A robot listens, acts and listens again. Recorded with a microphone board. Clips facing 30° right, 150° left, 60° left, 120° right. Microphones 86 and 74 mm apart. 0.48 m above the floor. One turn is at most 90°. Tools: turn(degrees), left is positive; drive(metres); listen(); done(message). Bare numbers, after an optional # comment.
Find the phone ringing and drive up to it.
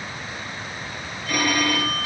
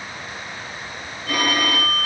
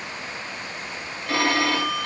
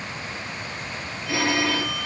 # The phone ringing: 90° left.
turn(90)
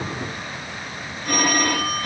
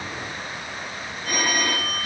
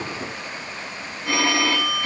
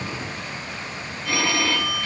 drive(1.0)
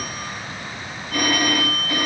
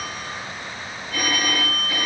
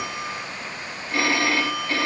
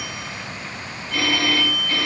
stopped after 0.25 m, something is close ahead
done("Blocked. The phone ringing is further on, straight ahead.")